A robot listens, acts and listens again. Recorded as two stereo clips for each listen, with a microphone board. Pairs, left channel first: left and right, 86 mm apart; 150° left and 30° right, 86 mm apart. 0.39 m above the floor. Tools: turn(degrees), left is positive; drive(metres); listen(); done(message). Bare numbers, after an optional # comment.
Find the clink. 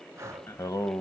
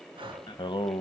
listen()
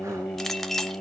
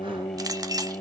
done("Found it: a clink, straight ahead, under 1 m away.")